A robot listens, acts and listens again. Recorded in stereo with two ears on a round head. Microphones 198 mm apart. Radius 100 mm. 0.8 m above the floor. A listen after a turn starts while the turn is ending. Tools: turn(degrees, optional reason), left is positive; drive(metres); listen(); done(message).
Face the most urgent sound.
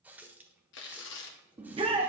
turn(degrees=-25, reason="The shout: about 25° right or 155° right.")
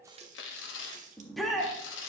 done("Found it: a shout, straight ahead, 1 to 2 m away.")